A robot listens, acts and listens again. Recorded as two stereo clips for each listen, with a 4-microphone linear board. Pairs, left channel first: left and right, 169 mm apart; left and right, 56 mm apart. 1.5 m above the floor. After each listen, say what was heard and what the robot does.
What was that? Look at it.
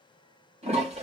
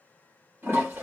The toilet flushing: about 35° right or 145° right. Turn 35° right.
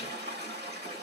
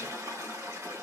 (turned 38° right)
So it is at 105° right. Turn 105° right.
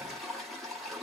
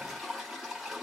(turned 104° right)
Found it: a toilet flushing, straight ahead.